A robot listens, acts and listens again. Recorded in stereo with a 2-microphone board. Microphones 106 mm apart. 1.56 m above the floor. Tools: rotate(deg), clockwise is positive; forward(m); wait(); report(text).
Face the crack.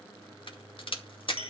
rotate(-55)
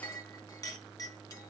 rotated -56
wait()
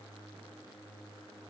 report("I heard a crack, but can't make it out now. It was about straight ahead or 70° left.")